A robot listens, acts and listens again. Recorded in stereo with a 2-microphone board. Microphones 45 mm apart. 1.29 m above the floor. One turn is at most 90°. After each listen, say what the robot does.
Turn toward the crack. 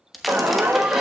Turn 30° left.
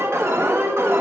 Keep listening.
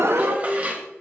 I heard a crack, but can't make it out now. It was about 30° right or 150° left.